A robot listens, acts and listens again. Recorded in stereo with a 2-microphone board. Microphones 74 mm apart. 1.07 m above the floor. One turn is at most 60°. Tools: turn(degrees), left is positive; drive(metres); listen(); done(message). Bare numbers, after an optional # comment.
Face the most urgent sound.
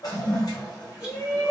# The shout: about 30° left or 150° left.
turn(30)
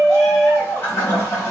done("Found it: a shout, straight ahead, 1 to 2 m away.")